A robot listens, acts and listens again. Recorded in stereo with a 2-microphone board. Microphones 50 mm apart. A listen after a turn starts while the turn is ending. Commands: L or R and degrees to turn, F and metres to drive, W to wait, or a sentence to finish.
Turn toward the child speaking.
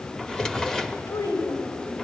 L90
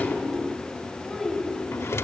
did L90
Found it: a child speaking, straight ahead, over 4 m away.